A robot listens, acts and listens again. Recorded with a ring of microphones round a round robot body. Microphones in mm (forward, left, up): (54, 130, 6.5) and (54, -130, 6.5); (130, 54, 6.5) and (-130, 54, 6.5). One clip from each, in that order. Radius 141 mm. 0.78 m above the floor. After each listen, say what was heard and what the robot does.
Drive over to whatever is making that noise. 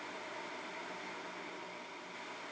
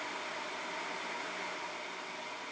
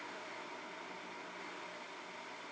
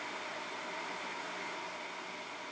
Keep listening.
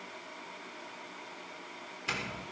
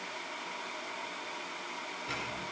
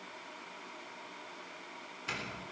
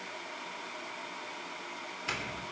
The doorbell: 110° left. Turn 110° left.
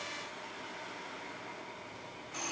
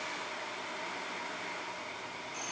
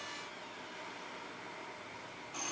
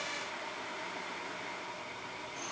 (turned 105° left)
Drive 1.0 m forward.
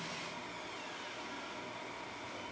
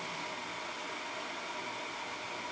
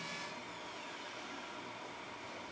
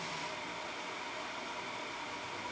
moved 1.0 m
Keep listening.
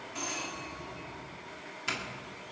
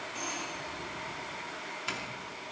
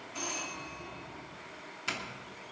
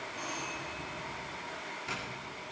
Drive 1.0 m forward.
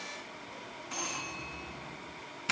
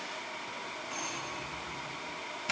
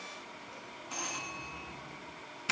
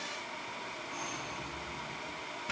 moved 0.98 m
Drive 1.0 m forward.
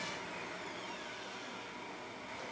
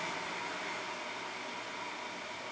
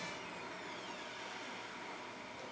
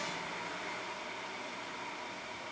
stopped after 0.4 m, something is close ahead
Keep listening.
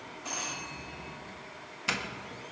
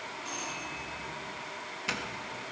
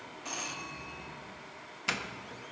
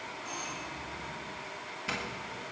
The doorbell is now 15° left. Turn 15° left.
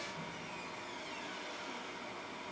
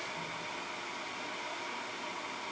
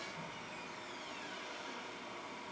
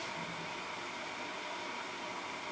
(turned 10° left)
Keep listening.
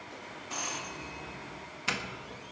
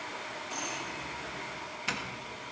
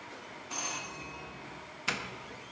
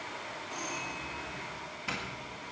I am next to the doorbell.